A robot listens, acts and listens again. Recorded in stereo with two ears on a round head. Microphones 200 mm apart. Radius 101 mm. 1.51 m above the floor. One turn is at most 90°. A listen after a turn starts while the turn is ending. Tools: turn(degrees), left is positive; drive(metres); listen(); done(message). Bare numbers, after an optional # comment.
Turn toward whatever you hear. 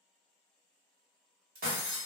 # The breaking glass: about 40° right or 140° right.
turn(-40)
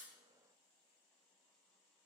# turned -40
listen()
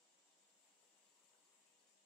done("I heard breaking glass, but can't make it out now. It was about straight ahead or 100° right.")